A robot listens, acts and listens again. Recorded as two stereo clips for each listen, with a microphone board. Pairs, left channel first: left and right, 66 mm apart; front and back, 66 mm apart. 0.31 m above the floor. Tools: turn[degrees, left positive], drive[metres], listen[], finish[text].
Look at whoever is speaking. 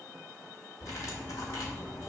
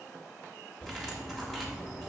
Action: listen[]
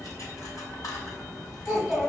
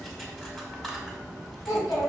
Action: finish[Found it: a child speaking, straight ahead.]